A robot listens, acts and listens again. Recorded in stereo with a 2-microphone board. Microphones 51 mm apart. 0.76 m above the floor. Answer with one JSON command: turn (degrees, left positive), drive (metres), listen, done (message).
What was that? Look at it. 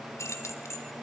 {"turn": 90}
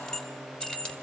{"turn": 20}
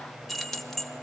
{"turn": 10}
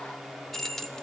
{"turn": 15}
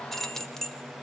{"turn": 15}
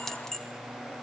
{"turn": 15}
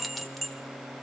{"done": "Found it: keys jangling, straight ahead."}